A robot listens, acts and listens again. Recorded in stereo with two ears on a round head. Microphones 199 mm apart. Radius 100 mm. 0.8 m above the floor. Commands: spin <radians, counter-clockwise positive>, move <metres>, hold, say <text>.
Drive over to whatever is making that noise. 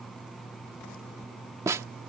spin -0.52
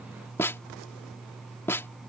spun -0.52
spin 0.26
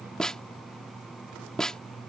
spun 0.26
move 1.0
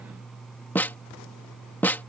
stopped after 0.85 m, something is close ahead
spin 0.17
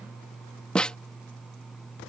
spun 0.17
say Arrived at the snare drum, straight ahead.